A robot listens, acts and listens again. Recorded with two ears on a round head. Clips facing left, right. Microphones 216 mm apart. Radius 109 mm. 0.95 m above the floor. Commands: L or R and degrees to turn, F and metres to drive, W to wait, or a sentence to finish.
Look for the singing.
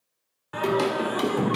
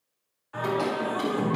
L70
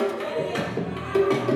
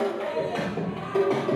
L25
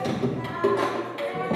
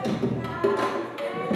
R15
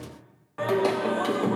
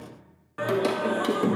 R25
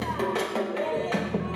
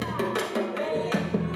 R20
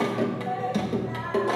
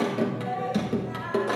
R10
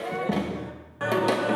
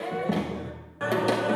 Found it: singing, straight ahead.